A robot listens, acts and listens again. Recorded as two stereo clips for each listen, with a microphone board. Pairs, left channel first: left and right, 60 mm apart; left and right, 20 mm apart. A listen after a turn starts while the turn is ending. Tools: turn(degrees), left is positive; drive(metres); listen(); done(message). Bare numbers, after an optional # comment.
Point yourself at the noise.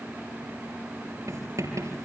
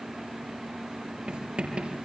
# The writing: about 65° right or 115° right.
turn(-65)
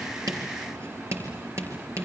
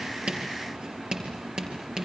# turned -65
# So it is at 50° right.
turn(-50)
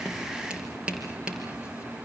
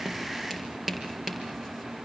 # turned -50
# The writing is now 20° right.
turn(-20)
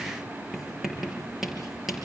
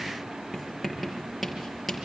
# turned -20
done("Found it: writing, straight ahead, over 4 m away.")